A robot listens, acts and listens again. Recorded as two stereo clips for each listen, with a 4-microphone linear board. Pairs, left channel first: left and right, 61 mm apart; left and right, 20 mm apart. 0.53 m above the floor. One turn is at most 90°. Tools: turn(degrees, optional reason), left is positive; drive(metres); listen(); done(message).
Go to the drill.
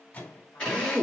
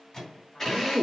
turn(degrees=20, reason="The drill: about 20° left or 160° left.")
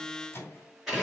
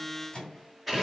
drive(metres=1.0)
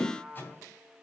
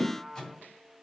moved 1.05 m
drive(metres=1.0)
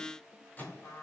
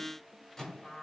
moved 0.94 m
listen()
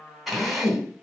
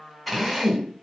drive(metres=1.0)
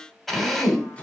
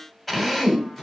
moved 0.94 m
drive(metres=1.0)
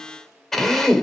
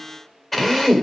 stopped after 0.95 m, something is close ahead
done("I am next to the drill.")